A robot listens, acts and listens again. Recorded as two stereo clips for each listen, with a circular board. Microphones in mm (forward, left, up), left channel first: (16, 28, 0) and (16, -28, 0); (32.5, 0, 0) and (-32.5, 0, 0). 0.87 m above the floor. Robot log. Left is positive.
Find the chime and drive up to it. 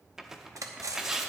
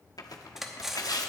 cmd idle
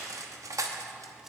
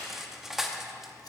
cmd idle
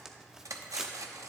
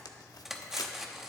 end: I can't make out a chime, only cutlery clinking and tearing paper.